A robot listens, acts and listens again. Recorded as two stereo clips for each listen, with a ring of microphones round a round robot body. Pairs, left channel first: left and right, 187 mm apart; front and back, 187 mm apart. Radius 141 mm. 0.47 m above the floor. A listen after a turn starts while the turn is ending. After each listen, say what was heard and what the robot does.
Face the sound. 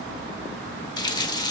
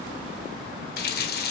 The running tap: 25° left. Turn 25° left.
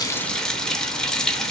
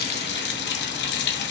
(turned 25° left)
Found it: a running tap, straight ahead, 1 to 2 m away.